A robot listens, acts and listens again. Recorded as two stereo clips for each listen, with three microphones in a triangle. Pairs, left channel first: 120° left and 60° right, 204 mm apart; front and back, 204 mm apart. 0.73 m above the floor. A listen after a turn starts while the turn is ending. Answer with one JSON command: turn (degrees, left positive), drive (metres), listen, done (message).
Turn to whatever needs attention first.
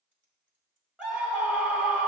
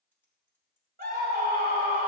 {"turn": -145}
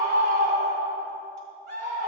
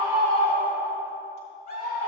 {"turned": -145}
{"turn": -35}
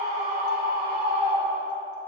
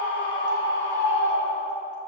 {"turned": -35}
{"turn": -20}
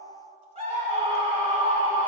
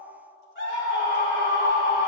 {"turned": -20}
{"done": "Facing the scream."}